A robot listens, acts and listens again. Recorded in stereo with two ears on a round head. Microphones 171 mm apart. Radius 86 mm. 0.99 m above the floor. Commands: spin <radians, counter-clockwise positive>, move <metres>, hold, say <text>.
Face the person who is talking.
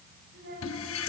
spin -0.96
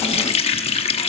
hold
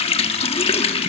hold
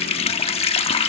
say I heard a child speaking, but can't make it out now. It was about straight ahead or 70° right.